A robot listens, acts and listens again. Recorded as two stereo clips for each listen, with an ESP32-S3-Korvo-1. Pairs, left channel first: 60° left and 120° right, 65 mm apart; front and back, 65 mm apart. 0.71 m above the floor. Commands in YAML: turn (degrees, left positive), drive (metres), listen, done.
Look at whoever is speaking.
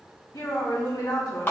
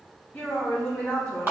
turn: 70
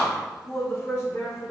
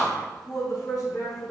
turn: 20
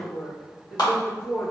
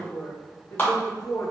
done: "Facing the woman speaking."